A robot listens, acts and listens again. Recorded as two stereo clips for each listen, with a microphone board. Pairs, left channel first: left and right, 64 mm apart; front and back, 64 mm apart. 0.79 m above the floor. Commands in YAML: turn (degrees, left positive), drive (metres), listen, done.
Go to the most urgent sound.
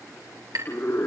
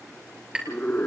turn: 55
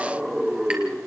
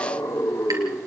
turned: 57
drive: 1.0
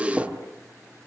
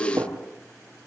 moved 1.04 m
turn: -15
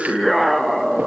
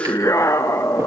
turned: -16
drive: 1.0
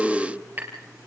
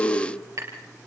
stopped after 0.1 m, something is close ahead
done: "I am next to the scream."